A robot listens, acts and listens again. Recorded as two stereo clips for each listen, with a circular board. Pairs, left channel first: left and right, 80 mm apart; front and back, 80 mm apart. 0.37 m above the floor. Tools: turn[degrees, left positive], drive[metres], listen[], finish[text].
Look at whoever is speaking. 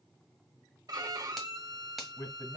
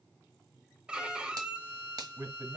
Thought: The man speaking: 135° left.
Action: turn[135]
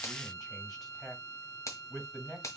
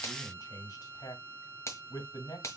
Action: finish[Facing the man speaking, 2 to 4 m away.]